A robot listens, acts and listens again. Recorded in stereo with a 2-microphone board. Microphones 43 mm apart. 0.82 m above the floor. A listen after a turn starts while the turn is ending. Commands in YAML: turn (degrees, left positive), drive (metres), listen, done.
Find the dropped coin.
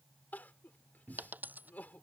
turn: -45
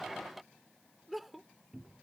listen: true
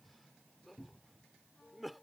done: "I heard a dropped coin, but can't make it out now. It was about straight ahead or 90° right."